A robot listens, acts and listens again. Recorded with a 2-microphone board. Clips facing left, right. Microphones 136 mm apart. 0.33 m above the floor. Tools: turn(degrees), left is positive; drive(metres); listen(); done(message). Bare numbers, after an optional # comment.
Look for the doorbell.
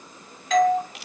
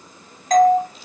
# The doorbell: about 45° right or 135° right.
turn(-45)
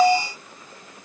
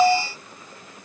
done("Facing the doorbell.")